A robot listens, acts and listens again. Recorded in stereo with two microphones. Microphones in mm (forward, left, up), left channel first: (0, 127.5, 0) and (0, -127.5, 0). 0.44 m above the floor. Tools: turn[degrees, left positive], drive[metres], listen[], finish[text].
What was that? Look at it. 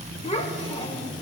Thought: The child speaking: about 25° left or 155° left.
Action: turn[25]
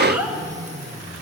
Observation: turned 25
Thought: So it is at 10° right.
Action: turn[-10]
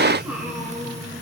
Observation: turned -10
Action: finish[Facing the child speaking.]